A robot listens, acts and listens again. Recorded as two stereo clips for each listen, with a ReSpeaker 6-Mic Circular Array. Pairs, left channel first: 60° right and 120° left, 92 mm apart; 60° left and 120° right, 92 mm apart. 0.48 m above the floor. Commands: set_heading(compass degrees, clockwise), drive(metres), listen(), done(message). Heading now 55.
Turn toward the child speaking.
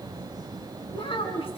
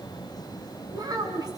set_heading(130)
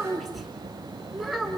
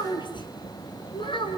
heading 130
set_heading(95)
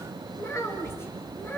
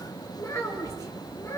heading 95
done("Found it: a child speaking, straight ahead, over 4 m away.")